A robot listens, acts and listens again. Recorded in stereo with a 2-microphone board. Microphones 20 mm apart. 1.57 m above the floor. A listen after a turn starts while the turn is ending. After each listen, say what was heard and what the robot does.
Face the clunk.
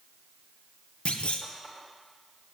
The clunk: about 70° left or 110° left. Turn 70° left.
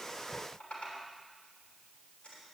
Keep listening.
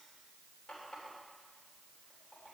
I heard a clunk, but can't make it out now. It was about straight ahead or 40° left.